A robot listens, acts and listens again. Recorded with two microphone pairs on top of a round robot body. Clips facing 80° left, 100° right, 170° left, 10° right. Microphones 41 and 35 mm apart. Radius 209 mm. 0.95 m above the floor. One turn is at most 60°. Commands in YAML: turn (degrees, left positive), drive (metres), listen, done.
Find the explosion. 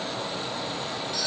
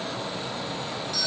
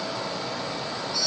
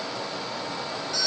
listen: true
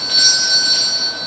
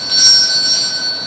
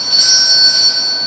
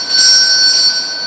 listen: true
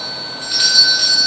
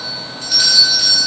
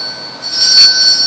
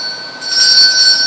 done: "I can't make out an explosion, only a doorbell."